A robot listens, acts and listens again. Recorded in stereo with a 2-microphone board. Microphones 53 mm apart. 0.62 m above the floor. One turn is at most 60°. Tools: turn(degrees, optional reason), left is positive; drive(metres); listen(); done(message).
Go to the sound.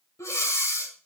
turn(degrees=60, reason="The breathing: about 70° left or 110° left.")
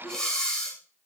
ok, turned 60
turn(degrees=15, reason="So it is at 15° left.")
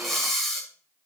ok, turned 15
drive(metres=1.0)
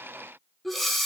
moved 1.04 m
drive(metres=1.0)
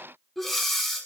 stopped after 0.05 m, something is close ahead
done("Arrived at the breathing, straight ahead.")